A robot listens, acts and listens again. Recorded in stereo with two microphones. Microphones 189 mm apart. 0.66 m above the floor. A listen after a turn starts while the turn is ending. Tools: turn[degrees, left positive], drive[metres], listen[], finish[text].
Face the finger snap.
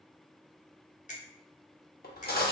Thought: The finger snap: about 40° left or 140° left.
Action: turn[40]
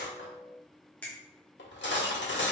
Thought: So it is at 10° left.
Action: turn[10]
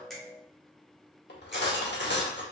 Action: listen[]
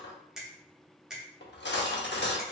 Action: finish[Found it: a finger snap, straight ahead, under 1 m away.]